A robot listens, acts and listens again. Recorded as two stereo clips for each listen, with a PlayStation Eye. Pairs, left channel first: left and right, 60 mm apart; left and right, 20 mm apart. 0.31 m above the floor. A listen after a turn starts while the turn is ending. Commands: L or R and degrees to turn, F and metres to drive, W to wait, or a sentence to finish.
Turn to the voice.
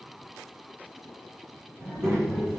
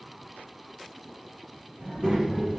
R50
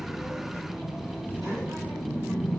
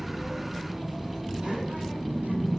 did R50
R80
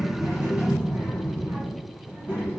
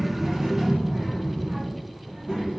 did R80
R25
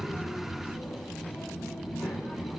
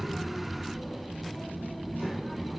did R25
Facing the child speaking.